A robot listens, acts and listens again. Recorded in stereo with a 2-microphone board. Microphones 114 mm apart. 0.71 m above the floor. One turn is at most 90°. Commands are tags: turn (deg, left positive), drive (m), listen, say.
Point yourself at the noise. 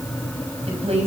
<turn deg="-65"/>
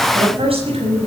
<turn deg="-60"/>
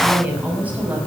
<turn deg="-15"/>
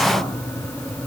<listen/>
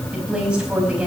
<turn deg="-10"/>
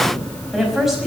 <say>Facing the woman speaking.</say>